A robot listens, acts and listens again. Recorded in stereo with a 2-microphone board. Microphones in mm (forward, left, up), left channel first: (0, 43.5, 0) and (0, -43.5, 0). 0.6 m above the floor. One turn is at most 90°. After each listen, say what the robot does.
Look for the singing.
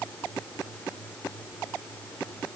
Keep listening.
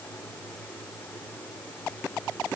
Keep listening.
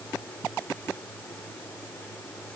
I can't make out singing to turn to.